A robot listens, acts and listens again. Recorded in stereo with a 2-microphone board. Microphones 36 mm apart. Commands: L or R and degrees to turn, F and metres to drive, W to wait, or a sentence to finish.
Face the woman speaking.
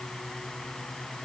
W
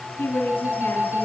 L75
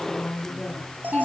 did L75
L25
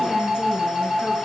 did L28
W
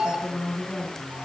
L10
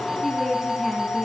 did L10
Found it: a woman speaking, straight ahead, over 4 m away.